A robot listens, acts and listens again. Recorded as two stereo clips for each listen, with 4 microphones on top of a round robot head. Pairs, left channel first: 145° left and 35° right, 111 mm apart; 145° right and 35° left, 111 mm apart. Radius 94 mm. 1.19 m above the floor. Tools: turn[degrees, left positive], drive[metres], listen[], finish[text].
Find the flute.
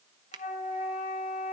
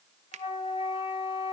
Thought: The flute: 170° left.
Action: turn[170]
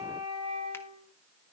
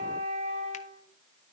Thought: The flute is now 10° left.
Action: turn[10]
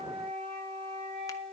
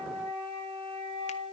Action: finish[Found it: a flute, straight ahead.]